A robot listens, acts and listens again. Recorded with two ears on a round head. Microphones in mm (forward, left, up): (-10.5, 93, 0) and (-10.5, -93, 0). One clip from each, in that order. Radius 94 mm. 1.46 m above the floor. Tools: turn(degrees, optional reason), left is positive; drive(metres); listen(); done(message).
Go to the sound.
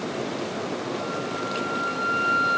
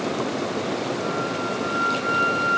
turn(degrees=55, reason="The flute: about 55° left or 125° left.")
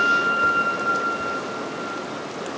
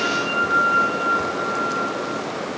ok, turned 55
turn(degrees=65, reason="So it is at 65° left.")
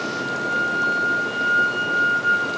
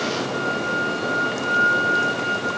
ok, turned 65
drive(metres=1.0)
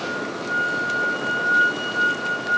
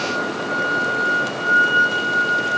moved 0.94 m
drive(metres=1.0)
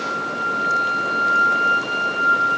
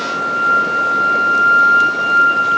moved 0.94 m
drive(metres=1.0)
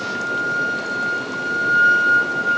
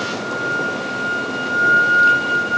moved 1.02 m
turn(degrees=10, reason="The flute is now 10° left.")
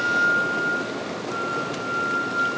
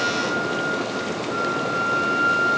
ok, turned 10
drive(metres=1.0)
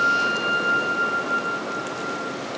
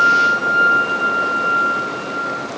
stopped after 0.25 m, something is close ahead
done("I am next to the flute.")